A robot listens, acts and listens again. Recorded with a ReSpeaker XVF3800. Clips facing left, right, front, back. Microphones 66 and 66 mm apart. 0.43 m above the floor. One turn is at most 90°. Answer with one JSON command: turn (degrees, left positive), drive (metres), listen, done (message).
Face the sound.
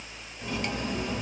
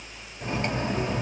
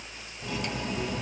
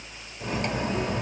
{"turn": -90}
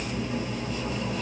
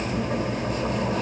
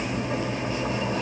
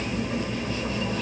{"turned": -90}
{"turn": -65}
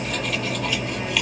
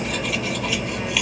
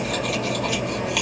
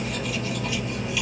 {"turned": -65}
{"done": "Facing the cutlery clinking."}